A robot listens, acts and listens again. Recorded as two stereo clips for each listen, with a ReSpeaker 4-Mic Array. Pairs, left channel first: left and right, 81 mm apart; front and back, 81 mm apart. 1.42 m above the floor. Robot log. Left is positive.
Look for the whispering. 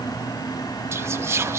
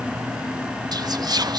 note: The whispering: 145° right.
cmd yaw -145
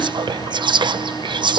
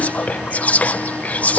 note: The whispering is now 70° right.
cmd yaw -70
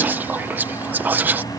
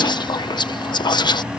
note: The whispering is now 20° right.
cmd yaw -20
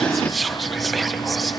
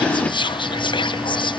end: Found it: whispering, straight ahead.